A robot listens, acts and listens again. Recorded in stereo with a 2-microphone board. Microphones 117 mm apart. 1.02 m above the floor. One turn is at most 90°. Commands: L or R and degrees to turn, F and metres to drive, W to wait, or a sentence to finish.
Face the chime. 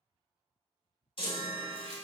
L50
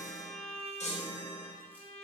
L80
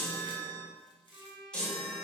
Facing the chime, under 1 m away.